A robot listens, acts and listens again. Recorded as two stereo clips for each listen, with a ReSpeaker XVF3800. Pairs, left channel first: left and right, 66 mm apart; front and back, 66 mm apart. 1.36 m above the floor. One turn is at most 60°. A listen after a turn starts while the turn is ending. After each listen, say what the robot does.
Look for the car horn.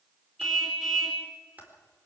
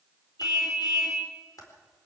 Found it: a car horn, straight ahead.